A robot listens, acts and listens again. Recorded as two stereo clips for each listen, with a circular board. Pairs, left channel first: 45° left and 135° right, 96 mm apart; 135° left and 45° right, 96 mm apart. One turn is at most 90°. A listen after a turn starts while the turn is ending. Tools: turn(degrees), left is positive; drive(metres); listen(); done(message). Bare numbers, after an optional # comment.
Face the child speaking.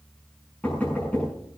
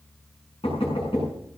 listen()
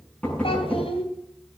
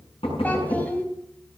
# The child speaking: 60° left.
turn(60)
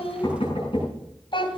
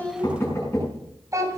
# The child speaking is now 10° left.
turn(10)
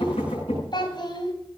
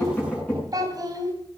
done("Found it: a child speaking, straight ahead.")